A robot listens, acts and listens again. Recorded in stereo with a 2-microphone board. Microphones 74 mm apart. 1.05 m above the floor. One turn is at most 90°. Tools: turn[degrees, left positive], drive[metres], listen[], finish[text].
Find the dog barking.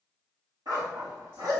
Thought: The dog barking: about 65° right or 115° right.
Action: turn[-65]
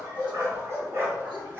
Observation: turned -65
Thought: So it is at 35° right.
Action: turn[-35]
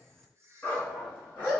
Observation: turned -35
Thought: The dog barking is now 20° left.
Action: turn[20]
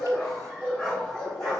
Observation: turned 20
Thought: The dog barking is now 15° left.
Action: turn[15]
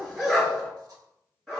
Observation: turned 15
Action: finish[Found it: a dog barking, straight ahead.]